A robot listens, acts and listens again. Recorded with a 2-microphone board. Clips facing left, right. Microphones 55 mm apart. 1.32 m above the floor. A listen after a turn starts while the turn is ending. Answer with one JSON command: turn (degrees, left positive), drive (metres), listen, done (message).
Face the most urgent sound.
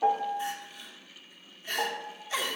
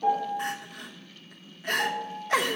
{"turn": -65}
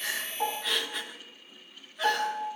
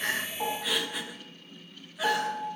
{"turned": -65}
{"done": "Found it: crying, straight ahead, 1 to 2 m away."}